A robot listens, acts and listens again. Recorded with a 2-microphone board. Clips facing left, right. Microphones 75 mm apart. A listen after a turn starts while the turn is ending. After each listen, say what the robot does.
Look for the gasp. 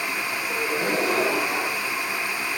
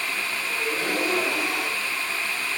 Turn 30° left.
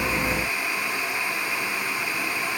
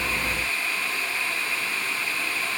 Keep listening.
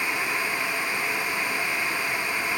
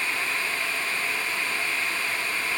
I heard a gasp, but can't make it out now. It was about straight ahead or 120° left.